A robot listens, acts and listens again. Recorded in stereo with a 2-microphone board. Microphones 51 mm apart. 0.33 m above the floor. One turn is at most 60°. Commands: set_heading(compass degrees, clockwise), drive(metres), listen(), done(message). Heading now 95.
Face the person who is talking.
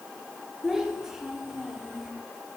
set_heading(125)
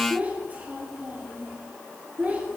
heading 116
set_heading(176)
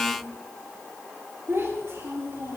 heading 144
set_heading(204)
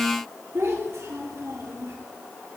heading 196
set_heading(256)
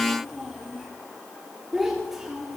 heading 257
done("Found it: a child speaking, straight ahead, over 4 m away.")